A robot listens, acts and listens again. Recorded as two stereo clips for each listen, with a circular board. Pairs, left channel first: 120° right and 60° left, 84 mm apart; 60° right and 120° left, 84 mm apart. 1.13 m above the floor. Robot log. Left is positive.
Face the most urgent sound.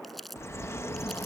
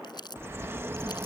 cmd idle
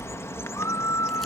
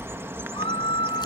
note: The scream: 65° right.
cmd yaw -65
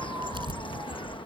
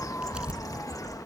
cmd idle
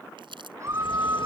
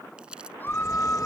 end: Facing the scream.